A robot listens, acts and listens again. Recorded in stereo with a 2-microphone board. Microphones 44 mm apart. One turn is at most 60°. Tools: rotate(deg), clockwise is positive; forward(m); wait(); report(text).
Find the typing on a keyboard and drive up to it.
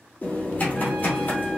rotate(-40)
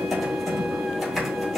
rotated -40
forward(1.0)
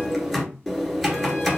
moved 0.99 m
forward(1.0)
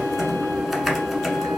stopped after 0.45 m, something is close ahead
report("I am next to the typing on a keyboard.")